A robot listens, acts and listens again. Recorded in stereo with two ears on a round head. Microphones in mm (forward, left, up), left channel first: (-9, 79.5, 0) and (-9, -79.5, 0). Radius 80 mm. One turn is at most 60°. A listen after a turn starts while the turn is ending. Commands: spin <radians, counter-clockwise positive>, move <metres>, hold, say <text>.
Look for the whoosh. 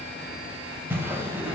spin -0.52
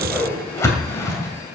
spin 0.35
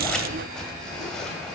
hold
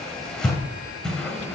say Found it: a whoosh, straight ahead, 2 to 4 m away.